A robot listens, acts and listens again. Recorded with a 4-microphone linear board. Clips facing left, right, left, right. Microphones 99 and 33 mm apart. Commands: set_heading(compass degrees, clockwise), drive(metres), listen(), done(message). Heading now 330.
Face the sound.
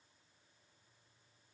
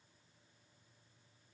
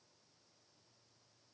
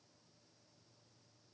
listen()
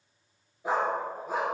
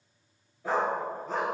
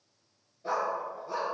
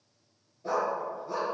set_heading(300)
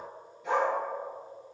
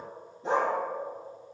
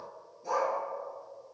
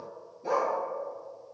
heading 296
set_heading(331)
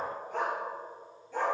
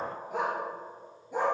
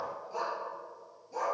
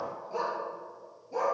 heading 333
set_heading(353)
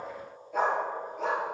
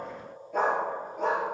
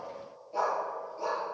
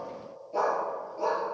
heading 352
done("Facing the dog barking.")